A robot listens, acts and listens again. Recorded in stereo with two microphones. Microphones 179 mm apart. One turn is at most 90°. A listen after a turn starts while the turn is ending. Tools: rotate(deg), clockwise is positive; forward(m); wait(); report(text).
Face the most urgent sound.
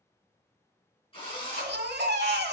rotate(65)
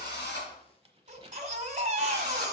rotate(45)
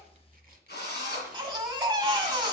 rotate(30)
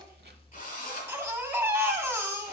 rotate(15)
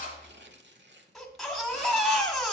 report("Facing the baby crying.")